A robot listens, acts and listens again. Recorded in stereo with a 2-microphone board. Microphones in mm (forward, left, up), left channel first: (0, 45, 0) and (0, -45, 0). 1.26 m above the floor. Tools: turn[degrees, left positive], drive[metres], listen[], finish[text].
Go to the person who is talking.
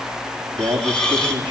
Thought: The man speaking: about 65° right or 115° right.
Action: turn[-65]
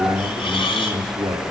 Thought: So it is at 50° right.
Action: turn[-50]
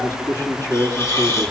Thought: The man speaking is now 25° left.
Action: turn[25]
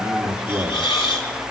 Thought: The man speaking is now 15° right.
Action: turn[-15]
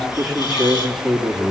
Action: drive[1.0]
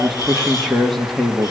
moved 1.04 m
Action: drive[1.0]
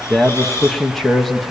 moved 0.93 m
Action: drive[1.0]
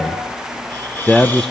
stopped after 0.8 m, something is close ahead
Action: finish[I am next to the man speaking.]